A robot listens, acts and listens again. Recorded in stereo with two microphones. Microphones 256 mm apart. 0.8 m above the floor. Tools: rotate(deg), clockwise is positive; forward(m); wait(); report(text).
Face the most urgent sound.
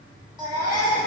rotate(15)
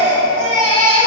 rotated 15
rotate(150)
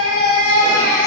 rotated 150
rotate(-30)
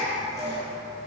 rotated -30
rotate(-10)
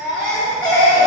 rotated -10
report("Facing the baby crying.")